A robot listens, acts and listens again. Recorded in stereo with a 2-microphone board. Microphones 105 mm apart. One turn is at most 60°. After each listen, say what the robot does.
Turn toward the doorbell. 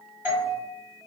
Turn 20° right.
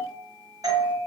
Turn 60° right.
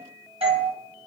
Turn 60° right.
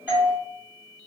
Turn 15° right.
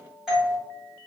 Found it: a doorbell, straight ahead.